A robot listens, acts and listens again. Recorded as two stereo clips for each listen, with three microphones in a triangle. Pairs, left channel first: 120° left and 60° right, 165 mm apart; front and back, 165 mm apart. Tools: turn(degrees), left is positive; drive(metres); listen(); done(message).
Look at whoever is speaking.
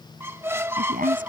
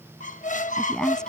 turn(degrees=-85)
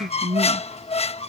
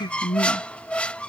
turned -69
turn(degrees=-15)
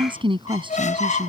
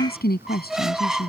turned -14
done("Found it: a woman speaking, straight ahead.")